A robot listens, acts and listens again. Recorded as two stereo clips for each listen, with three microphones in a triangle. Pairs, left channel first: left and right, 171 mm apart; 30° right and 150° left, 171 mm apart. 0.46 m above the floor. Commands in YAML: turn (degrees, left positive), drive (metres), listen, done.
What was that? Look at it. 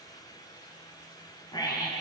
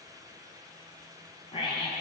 turn: 25
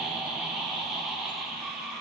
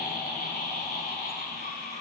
done: "Facing the scream."